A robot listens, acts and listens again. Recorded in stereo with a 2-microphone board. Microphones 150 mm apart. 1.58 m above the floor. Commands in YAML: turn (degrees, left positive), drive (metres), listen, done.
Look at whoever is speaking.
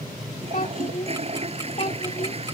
turn: 55
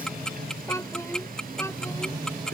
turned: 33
turn: 20
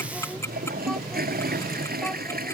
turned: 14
listen: true
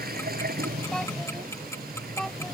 done: "Found it: a child speaking, straight ahead."